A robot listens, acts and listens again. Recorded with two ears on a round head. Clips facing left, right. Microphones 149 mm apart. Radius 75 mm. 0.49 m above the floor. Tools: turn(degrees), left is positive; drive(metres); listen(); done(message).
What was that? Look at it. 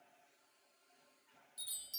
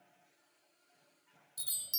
turn(degrees=-55)
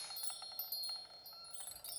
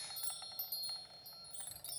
done("Facing the chime, under 1 m away.")